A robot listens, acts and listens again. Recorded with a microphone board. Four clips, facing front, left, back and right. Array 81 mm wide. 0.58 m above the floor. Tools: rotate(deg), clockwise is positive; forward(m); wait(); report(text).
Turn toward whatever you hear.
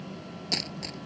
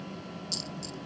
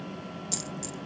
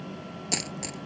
rotate(65)
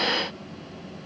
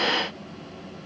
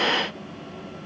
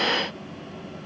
report("Facing where the dropped coin came from. I can't hear it now.")